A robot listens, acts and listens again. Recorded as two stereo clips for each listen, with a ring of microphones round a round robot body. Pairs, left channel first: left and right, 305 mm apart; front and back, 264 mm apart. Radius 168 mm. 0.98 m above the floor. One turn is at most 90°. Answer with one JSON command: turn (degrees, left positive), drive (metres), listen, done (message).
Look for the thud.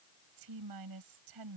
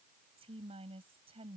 {"listen": true}
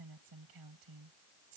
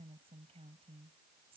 {"listen": true}
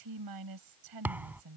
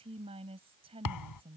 {"done": "Found it: a thud, straight ahead."}